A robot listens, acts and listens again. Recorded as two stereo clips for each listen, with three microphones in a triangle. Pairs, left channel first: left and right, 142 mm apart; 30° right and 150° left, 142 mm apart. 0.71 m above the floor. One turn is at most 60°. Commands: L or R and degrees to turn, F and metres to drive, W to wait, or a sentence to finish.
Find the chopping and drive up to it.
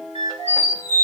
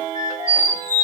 W
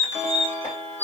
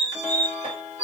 W
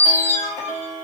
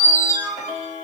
I can't make out chopping, only a squeak.